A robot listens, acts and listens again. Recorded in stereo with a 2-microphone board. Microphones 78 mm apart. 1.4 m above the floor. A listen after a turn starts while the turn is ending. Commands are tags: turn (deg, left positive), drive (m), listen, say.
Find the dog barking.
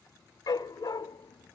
<turn deg="60"/>
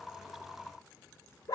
<turn deg="60"/>
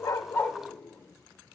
<listen/>
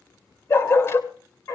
<turn deg="40"/>
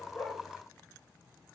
<listen/>
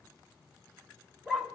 <say>Found it: a dog barking, straight ahead, 2 to 4 m away.</say>